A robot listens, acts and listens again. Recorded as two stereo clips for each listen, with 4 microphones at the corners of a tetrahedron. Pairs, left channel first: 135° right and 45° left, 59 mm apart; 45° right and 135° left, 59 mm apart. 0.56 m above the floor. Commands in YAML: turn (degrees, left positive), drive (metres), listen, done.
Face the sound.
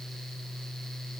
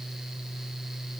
listen: true
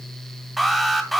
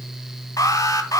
turn: -45
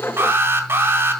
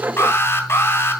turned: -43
done: "Facing the alarm, 2 to 4 m away."